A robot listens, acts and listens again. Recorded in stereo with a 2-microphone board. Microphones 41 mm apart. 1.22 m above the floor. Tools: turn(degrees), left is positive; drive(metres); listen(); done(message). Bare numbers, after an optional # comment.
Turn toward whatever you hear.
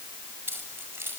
# The keys jangling: about 70° right or 110° right.
turn(-70)
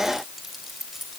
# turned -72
done("Found it: keys jangling, straight ahead.")